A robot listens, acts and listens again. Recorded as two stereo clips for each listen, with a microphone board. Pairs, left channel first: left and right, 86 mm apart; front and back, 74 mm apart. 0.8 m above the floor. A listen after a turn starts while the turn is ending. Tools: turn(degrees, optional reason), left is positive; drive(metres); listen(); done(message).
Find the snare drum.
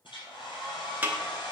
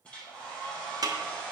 turn(degrees=-160, reason="The snare drum: 160° right.")
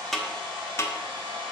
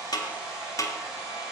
turn(degrees=35, reason="The snare drum is now 35° left.")
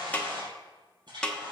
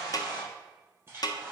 turn(degrees=10, reason="The snare drum is now 10° left.")
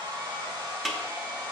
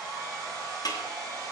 done("Facing the snare drum.")